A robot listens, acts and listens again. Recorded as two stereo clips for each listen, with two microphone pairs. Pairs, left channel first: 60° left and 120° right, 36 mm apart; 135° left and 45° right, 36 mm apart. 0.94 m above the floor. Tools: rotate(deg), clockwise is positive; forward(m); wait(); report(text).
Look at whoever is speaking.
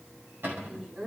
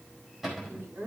rotate(70)
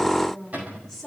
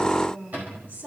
rotate(30)
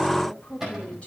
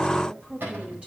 rotate(-10)
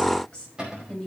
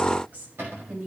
rotate(10)
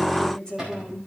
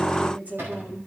report("Facing the woman speaking, 2 to 4 m away.")